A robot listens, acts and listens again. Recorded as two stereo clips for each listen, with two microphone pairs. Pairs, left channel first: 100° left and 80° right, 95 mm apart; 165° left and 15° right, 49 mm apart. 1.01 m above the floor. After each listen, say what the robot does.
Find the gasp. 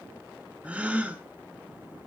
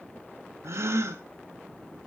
Found it: a gasp, straight ahead, 1 to 2 m away.